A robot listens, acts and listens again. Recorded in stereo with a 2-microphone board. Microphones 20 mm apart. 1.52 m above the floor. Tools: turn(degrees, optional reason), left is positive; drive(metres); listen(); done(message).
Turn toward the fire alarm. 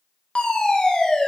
turn(degrees=90)
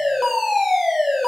done("Found it: a fire alarm, straight ahead.")